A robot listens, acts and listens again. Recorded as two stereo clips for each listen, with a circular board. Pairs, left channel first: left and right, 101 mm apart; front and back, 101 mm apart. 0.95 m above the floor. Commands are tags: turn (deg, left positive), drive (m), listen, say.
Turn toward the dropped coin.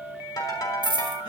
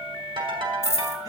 <turn deg="-60"/>
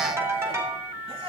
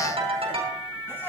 <say>Facing where the dropped coin came from. I can't hear it now.</say>